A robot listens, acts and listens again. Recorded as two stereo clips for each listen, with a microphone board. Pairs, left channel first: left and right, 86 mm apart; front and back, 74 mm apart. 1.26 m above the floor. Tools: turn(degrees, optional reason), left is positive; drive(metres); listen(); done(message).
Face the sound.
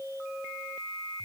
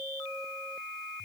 listen()
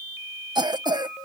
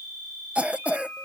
turn(degrees=-110, reason="The cough: 110° right.")
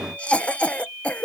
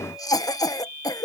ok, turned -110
turn(degrees=15, reason="The cough is now 15° left.")
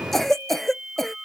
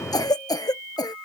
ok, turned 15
done("Facing the cough.")